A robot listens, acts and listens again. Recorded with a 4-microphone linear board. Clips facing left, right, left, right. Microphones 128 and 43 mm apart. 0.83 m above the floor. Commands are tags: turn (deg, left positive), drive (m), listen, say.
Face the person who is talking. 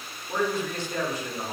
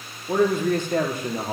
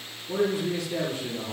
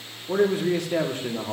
<turn deg="-55"/>
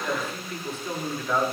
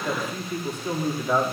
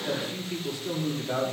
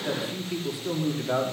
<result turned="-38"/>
<turn deg="-15"/>
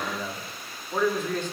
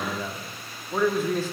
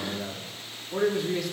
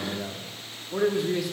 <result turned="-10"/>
<say>Facing the man speaking, 1 to 2 m away.</say>